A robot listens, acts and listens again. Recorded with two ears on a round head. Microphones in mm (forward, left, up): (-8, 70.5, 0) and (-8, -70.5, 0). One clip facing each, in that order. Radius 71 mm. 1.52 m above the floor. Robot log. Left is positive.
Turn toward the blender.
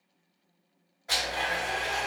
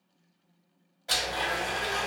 note: The blender: about 30° right or 150° right.
cmd yaw -30
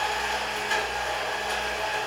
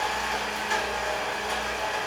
end: Facing the blender, 1 to 2 m away.